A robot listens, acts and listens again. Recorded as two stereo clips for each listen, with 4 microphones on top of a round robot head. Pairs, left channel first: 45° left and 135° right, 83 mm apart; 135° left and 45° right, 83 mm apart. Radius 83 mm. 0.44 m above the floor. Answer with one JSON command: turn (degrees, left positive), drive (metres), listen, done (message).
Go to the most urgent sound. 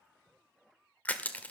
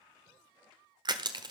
{"listen": true}
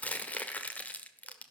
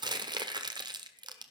{"listen": true}
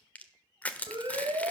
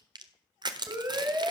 {"turn": -100}
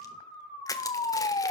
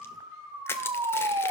{"turn": 10}
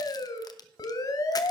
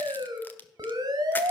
{"drive": 1.0}
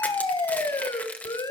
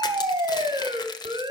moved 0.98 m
{"drive": 1.0}
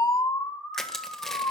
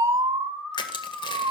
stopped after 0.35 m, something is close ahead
{"done": "I am next to the siren."}